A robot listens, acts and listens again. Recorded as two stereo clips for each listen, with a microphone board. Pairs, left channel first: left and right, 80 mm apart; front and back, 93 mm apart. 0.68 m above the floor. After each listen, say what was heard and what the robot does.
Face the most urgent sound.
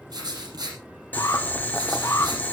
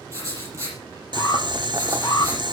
The alarm: 45° left. Turn 45° left.
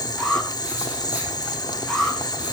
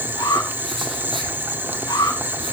Found it: an alarm, straight ahead, over 4 m away.